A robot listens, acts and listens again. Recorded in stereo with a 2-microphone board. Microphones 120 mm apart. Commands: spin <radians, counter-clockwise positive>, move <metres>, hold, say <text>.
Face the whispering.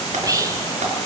spin -0.52
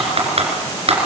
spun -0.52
hold
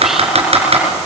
hold
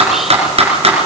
say I heard whispering, but can't make it out now. It was about straight ahead or 120° right.